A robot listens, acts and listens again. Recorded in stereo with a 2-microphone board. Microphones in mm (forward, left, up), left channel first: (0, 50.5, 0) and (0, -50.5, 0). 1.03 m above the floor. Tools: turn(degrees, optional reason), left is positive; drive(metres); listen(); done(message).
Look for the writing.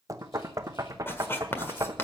turn(degrees=25, reason="The writing: about 25° left or 155° left.")
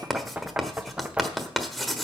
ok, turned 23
done("Facing the writing, 1 to 2 m away.")